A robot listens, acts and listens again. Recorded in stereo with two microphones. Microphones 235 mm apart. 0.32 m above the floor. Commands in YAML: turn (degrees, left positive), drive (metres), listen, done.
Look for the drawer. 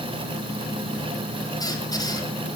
listen: true
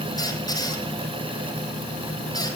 listen: true
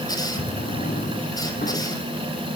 turn: 40
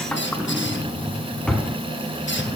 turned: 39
done: "Found it: a drawer, straight ahead, 1 to 2 m away."